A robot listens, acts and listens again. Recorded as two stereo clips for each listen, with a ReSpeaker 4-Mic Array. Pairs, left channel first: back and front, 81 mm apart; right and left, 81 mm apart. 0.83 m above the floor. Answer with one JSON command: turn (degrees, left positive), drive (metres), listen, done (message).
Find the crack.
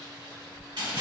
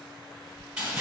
{"turn": -85}
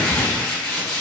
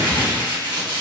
{"done": "Facing where the crack came from. I can't hear it now."}